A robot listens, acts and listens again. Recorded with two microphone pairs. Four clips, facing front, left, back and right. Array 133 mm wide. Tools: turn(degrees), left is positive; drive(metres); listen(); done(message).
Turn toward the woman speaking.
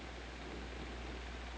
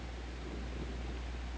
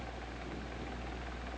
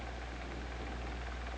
listen()
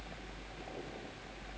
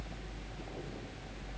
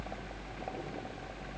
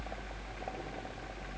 listen()
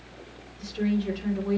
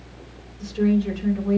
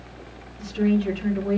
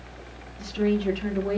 turn(degrees=-105)
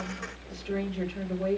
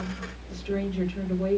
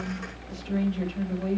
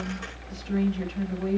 turn(degrees=50)
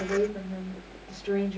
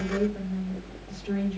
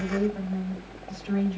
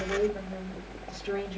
turn(degrees=-25)
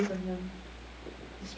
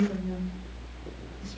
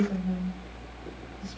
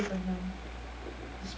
done("Facing the woman speaking, 2 to 4 m away.")